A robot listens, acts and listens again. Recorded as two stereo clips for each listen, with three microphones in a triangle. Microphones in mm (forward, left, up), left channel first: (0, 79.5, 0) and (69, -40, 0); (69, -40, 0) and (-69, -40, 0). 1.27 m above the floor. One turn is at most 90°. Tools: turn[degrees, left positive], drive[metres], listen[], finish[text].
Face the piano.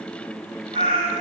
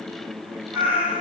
Action: listen[]
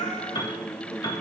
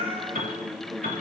Thought: The piano: 175° left.
Action: turn[90]
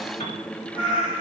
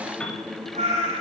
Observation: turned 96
Thought: The piano is now 80° left.
Action: turn[80]
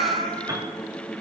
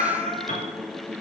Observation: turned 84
Action: finish[Facing the piano, 2 to 4 m away.]